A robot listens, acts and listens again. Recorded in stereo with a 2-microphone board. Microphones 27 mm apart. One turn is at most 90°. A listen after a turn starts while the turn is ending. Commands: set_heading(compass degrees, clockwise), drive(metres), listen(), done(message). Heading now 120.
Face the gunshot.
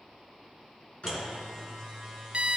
set_heading(70)
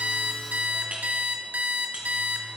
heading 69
listen()
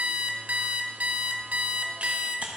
done("I heard a gunshot, but can't make it out now. It was about straight ahead or 80° left.")